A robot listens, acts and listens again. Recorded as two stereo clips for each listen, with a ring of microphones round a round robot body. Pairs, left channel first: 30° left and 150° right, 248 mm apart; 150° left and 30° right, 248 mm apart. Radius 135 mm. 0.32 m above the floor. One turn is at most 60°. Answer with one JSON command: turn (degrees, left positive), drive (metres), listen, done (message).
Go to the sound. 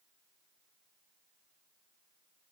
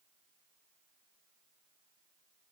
{"listen": true}
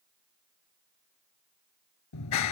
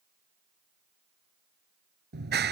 {"turn": 20}
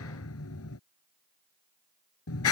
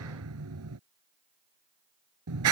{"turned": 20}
{"drive": 1.0}
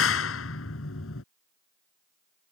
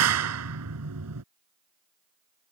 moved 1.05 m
{"drive": 1.0}
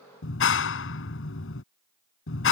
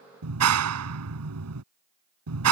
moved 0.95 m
{"turn": -10}
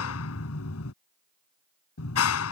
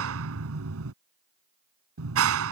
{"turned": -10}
{"drive": 1.0}
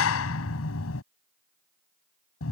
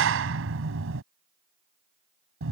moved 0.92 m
{"drive": 1.0}
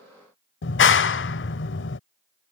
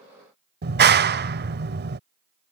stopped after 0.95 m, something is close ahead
{"done": "Arrived at the clap, straight ahead."}